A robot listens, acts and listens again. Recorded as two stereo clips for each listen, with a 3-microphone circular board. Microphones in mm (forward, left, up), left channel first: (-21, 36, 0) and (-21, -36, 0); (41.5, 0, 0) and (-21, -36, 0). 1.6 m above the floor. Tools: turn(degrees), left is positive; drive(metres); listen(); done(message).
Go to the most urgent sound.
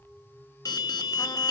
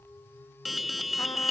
turn(degrees=120)
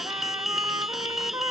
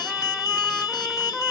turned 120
drive(metres=1.0)
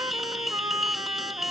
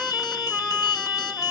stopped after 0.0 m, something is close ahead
done("Something is in my way. I am facing the alarm but have not reached it.")